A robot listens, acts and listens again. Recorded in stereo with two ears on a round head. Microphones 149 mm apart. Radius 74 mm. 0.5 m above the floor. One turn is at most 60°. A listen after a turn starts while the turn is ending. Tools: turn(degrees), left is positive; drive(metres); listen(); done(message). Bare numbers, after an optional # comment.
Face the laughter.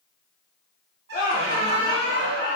# The laughter: about 55° left or 125° left.
turn(55)
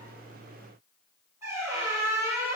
listen()
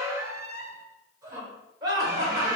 # So it is at 30° right.
turn(-30)
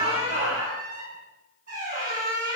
done("Found it: laughter, straight ahead.")